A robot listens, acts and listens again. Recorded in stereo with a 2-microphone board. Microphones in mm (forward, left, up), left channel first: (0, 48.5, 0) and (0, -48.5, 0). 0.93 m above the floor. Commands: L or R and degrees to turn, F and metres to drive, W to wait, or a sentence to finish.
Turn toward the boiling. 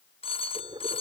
R65
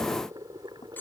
R50
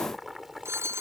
Found it: boiling, straight ahead.